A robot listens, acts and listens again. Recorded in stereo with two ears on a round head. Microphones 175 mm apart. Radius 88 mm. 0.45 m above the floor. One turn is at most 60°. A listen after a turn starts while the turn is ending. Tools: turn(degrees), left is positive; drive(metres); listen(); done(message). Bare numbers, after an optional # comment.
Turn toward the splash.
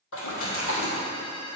turn(60)
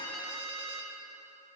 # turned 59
# Nothing new. It was at 30° left.
turn(30)
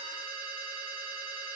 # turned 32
done("I heard a splash from this way, but can't make it out now.")